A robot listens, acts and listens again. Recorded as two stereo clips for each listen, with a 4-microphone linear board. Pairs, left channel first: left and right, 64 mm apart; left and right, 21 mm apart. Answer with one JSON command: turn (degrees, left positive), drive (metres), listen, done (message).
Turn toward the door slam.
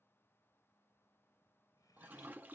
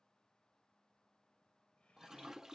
{"listen": true}
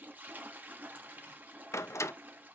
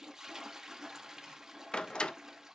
{"turn": 50}
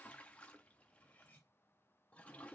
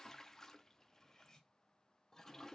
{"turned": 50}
{"listen": true}
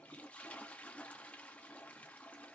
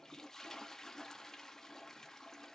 {"done": "I heard a door slam, but can't make it out now. It was about straight ahead or 80° left."}